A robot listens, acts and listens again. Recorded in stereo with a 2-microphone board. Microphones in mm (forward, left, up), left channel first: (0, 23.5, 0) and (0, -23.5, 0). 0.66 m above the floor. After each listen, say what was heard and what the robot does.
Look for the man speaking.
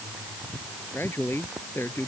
The man speaking: about 55° left or 125° left. Turn 55° left.
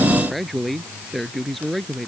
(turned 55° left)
Found it: a man speaking, straight ahead.